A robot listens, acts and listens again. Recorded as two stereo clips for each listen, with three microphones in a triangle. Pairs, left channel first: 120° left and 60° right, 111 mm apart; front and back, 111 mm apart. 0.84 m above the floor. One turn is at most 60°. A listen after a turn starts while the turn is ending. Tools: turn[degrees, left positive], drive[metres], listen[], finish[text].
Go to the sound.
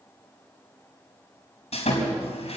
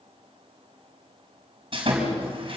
Thought: The sawing: 140° left.
Action: turn[60]
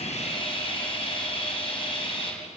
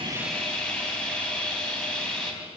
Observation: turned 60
Thought: The sawing is now 80° left.
Action: turn[60]
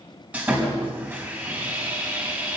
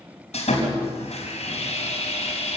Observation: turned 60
Thought: The sawing is now 15° left.
Action: turn[15]
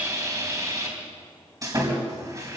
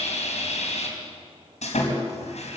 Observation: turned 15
Action: drive[1.0]
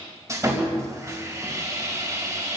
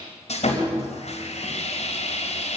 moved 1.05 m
Action: drive[1.0]
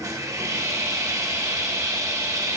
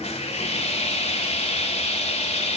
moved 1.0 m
Action: drive[1.0]
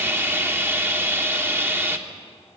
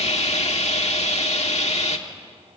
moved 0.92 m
Thought: The sawing is now 10° left.
Action: turn[10]
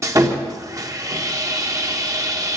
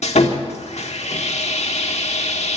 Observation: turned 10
Action: drive[1.0]
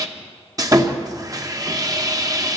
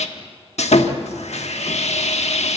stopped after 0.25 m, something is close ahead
Action: finish[Arrived at the sawing, straight ahead.]